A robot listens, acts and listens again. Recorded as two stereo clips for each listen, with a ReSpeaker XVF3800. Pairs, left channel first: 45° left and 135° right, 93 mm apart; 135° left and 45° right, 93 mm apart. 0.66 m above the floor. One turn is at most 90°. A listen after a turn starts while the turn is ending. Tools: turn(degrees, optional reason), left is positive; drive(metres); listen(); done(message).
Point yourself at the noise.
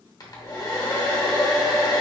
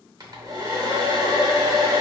done("Found it: a hair dryer, straight ahead, under 1 m away.")